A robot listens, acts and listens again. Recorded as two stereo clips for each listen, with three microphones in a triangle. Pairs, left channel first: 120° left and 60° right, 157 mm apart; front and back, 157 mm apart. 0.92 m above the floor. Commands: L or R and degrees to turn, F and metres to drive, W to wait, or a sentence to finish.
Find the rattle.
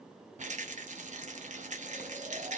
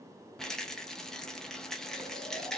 R85
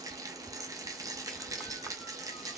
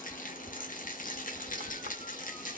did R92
Found it: a rattle, straight ahead, under 1 m away.